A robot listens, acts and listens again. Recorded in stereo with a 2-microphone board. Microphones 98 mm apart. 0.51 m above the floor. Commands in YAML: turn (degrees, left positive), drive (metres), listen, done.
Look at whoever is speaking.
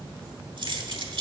listen: true
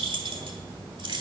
listen: true
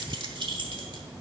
done: "I can't make out anyone speaking to turn to."